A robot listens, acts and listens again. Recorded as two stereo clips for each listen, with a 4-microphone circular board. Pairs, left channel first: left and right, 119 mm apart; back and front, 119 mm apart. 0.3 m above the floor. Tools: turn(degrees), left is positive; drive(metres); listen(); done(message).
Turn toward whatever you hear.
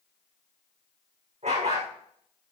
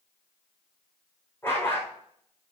turn(degrees=-105)
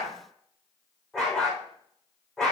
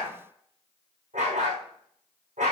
done("Facing the dog barking.")